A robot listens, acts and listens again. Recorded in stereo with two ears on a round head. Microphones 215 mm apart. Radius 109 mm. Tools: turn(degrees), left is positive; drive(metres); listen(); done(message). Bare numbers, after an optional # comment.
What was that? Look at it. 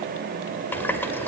turn(30)
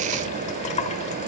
# So it is at 140° left.
turn(140)
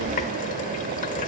# The running tap is now 45° left.
turn(45)
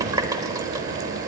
# The running tap is now 20° right.
turn(-20)
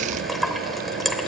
done("Facing the running tap.")